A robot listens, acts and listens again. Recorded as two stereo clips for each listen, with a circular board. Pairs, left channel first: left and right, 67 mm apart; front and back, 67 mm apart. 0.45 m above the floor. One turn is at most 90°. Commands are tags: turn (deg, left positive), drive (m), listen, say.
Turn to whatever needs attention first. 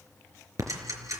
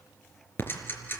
<listen/>
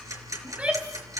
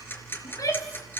<turn deg="-20"/>
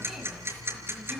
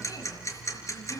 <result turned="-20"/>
<listen/>
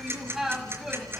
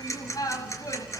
<say>Found it: a shout, straight ahead, 2 to 4 m away.</say>